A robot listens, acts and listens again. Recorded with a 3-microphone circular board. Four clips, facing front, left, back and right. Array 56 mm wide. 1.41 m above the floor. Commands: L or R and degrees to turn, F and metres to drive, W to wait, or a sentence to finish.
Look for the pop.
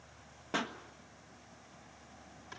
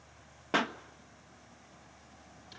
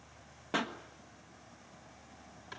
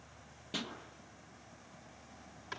L95
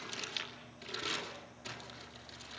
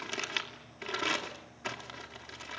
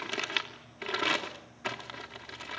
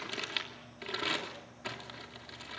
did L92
I heard a pop from this way, but can't make it out now.